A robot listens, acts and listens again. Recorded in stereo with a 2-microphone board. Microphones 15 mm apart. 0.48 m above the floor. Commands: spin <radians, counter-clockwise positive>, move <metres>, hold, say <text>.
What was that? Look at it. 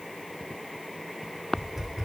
spin -0.35
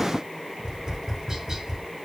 spin -2.44
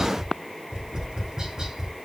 spin -0.70
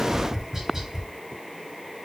spin -0.35
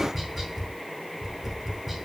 say Found it: tapping, straight ahead, 2 to 4 m away.